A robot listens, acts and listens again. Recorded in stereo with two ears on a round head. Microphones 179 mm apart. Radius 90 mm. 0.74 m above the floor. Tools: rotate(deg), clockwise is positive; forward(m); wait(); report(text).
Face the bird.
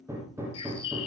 rotate(-25)
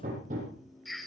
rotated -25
report("Found it: a bird, straight ahead.")